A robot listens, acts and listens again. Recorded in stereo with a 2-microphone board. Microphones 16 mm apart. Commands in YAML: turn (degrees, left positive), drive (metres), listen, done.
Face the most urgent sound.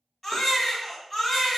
turn: 30
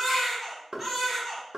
turn: -15
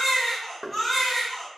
done: "Facing the baby crying, 1 to 2 m away."